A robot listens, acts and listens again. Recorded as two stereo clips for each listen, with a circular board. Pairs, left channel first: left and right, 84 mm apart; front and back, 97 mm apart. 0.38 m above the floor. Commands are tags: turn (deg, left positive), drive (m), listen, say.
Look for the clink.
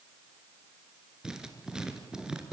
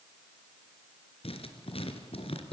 <listen/>
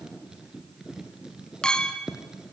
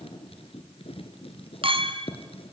<turn deg="170"/>
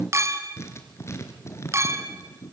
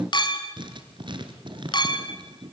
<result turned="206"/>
<turn deg="-35"/>
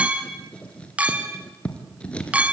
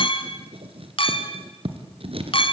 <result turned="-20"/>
<turn deg="-15"/>
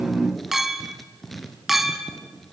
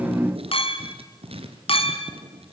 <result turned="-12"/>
<say>Facing the clink.</say>